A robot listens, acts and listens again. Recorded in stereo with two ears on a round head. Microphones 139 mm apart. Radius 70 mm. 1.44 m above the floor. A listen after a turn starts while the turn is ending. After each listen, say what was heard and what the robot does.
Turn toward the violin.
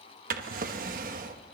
Keep listening.
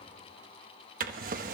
Keep listening.
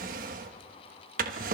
I can't make out a violin, only a drawer.